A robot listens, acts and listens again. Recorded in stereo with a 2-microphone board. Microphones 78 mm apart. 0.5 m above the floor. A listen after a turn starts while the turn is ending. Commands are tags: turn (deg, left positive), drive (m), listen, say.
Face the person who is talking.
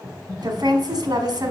<turn deg="-60"/>
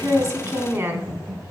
<turn deg="-40"/>
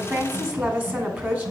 <turn deg="-25"/>
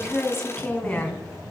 <turn deg="15"/>
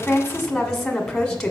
<say>Found it: a woman speaking, straight ahead.</say>